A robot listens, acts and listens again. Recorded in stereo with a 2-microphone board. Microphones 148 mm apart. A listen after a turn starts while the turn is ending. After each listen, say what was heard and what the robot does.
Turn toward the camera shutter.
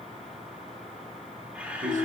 Turn 30° right.
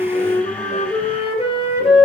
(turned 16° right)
Keep listening.
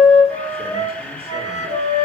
So it is at 10° left. Turn 10° left.
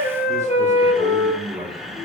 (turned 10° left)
Keep listening.
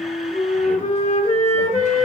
Keep listening.
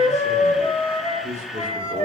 Facing the camera shutter, 1 to 2 m away.